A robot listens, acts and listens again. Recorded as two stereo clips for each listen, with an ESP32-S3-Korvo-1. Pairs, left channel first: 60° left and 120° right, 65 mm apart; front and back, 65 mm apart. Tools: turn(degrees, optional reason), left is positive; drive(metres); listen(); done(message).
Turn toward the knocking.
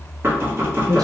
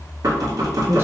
turn(degrees=-170, reason="The knocking: 170° right.")
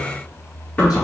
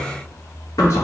done("Facing the knocking.")